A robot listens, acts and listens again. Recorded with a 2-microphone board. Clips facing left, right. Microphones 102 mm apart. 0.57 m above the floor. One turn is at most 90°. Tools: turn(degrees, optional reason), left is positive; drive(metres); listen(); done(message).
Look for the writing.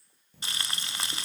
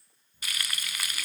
turn(degrees=70, reason="The writing: about 70° left or 110° left.")
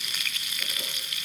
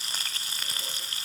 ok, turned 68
listen()
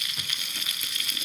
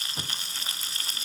listen()
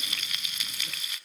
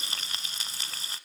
done("I heard writing, but can't make it out now. It was about 5° left or 40° left.")